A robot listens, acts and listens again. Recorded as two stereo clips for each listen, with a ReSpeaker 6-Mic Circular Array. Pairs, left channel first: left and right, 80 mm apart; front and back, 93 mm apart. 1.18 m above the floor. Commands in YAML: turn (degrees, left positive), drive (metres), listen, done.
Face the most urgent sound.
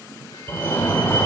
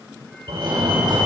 turn: 145
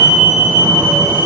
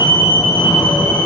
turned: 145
turn: -35
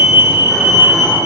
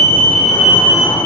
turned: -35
turn: -10
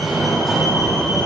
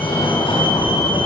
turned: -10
done: "Facing the fire alarm, over 4 m away."